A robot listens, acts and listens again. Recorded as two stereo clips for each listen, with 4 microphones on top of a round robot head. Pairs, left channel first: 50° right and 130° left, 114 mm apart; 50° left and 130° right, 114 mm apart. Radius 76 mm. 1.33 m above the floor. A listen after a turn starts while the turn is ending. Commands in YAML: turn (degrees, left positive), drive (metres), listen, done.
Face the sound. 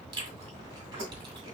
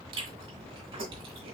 turn: -175
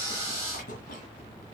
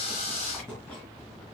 turn: -35
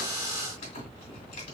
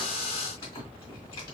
done: "Found it: chewing, straight ahead."